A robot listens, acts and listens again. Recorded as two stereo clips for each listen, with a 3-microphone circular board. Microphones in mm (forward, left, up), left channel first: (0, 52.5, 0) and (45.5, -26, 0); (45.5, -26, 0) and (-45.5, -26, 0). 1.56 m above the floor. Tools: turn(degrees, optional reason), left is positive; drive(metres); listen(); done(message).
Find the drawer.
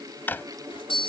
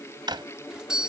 turn(degrees=-175, reason="The drawer: 175° right.")
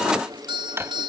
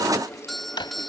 done("Found it: a drawer, straight ahead.")